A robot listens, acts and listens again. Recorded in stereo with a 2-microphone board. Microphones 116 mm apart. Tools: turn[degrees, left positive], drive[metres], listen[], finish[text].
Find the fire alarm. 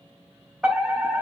Action: turn[-30]
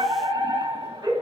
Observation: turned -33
Thought: So it is at 145° right.
Action: turn[-145]
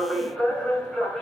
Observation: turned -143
Action: finish[Found it: a fire alarm, straight ahead.]